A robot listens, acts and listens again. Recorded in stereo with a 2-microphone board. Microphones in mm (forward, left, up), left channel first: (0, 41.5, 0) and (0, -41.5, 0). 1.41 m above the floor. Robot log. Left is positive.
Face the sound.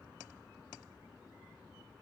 cmd idle
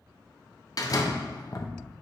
note: The door slam: about 45° left or 135° left.
cmd yaw +45
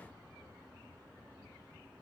cmd idle
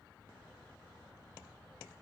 end: I heard a door slam, but can't make it out now. It was about straight ahead or 90° left.